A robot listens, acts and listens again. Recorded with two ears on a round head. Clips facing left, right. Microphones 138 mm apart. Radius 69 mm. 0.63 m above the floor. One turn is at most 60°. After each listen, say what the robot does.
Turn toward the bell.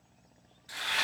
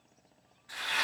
Keep listening.
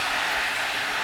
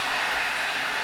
Keep listening.
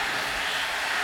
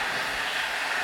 I can't make out a bell, only frying.